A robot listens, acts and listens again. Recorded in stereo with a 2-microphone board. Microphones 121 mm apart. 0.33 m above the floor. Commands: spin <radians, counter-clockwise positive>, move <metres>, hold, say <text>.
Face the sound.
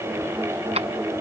spin -1.05
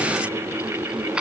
spin -0.17
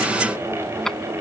say Found it: keys jangling, straight ahead.